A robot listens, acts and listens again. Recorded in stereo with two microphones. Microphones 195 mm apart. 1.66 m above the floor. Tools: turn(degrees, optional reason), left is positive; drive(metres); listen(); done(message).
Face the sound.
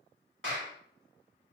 turn(degrees=-90)
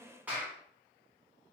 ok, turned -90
turn(degrees=-10, reason="So it is at 10° right.")
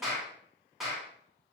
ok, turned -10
done("Facing the clap.")